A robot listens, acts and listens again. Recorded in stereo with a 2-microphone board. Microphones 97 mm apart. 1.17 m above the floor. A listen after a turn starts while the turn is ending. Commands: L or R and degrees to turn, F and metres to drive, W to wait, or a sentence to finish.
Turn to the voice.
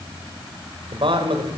R60
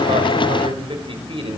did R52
R70
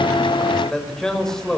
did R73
Found it: a man speaking, straight ahead.